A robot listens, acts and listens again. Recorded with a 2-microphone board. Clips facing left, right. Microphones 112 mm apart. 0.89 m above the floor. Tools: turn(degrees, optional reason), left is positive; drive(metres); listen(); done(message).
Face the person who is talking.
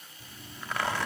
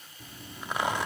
listen()
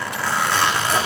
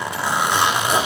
listen()
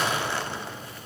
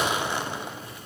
done("I can't make out anyone speaking, only a zipper.")